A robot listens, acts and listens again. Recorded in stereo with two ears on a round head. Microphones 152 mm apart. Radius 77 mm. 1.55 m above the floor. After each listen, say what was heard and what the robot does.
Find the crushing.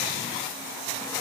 Keep listening.
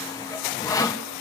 Keep listening.
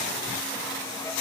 I can't make out crushing, only sawing.